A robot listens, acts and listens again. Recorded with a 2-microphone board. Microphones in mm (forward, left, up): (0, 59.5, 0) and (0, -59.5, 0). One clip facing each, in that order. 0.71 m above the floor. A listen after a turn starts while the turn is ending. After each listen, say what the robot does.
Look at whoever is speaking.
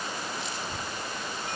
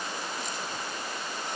Turn 30° left.
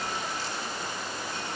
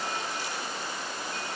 Keep listening.
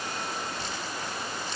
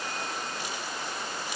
Turn 20° right.
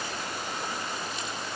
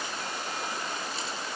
Keep listening.
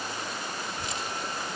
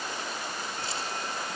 Found it: a child speaking, straight ahead.